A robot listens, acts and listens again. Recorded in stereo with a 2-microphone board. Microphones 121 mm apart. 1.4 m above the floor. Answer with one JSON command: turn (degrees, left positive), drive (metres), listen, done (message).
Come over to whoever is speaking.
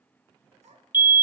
{"turn": -70}
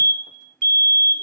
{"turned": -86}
{"listen": true}
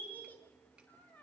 {"turn": 15}
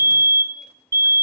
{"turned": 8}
{"listen": true}
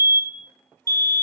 {"listen": true}
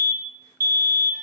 {"done": "I heard a child speaking from this way, but can't make it out now. I did not reach it."}